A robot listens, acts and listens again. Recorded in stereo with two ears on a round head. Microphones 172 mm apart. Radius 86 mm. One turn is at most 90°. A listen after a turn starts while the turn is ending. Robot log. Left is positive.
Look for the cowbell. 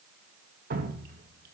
cmd idle
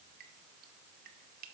cmd idle
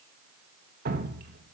end: I can't make out a cowbell to turn to.